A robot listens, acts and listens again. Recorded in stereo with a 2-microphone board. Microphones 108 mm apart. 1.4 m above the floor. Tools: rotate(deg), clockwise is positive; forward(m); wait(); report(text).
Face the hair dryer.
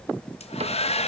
rotate(-70)
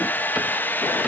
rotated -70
rotate(-15)
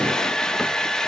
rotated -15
report("Facing the hair dryer.")